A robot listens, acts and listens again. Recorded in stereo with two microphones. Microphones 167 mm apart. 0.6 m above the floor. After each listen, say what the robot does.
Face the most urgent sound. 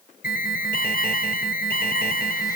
Turn 65° left.
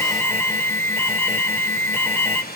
Turn 15° left.
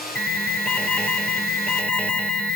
Found it: an alarm, straight ahead, 2 to 4 m away.